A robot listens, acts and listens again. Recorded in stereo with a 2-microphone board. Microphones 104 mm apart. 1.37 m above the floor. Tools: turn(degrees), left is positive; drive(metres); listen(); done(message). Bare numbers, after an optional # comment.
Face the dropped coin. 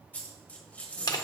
turn(30)
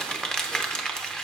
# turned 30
listen()
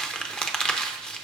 done("I heard a dropped coin, but can't make it out now. It was about 15° right or 135° left.")